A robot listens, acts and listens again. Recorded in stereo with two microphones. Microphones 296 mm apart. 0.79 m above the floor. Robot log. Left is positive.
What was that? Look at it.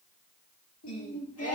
note: The singing: about 50° left or 130° left.
cmd yaw +50
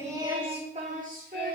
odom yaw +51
note: So it is at 30° right.
cmd yaw -30
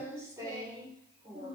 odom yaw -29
note: The singing is now 20° right.
cmd yaw -20
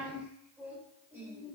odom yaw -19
note: The singing is now 10° right.
cmd yaw -10
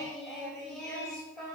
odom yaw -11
end: Facing the singing, 2 to 4 m away.